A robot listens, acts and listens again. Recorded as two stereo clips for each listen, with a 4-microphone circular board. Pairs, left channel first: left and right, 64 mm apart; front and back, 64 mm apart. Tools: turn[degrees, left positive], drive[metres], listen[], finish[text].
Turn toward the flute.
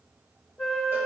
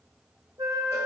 Thought: The flute: 175° right.
Action: turn[-175]
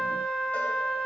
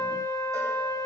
Thought: The flute is now 15° left.
Action: turn[15]
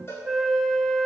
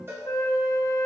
Action: finish[Facing the flute.]